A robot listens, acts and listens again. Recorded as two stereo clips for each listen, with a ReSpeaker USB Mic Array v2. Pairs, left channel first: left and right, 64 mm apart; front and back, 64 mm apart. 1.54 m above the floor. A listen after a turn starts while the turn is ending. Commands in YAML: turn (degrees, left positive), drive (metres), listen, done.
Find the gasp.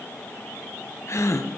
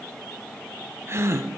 turn: 135
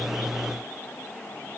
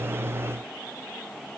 done: "I heard a gasp from this way, but can't make it out now."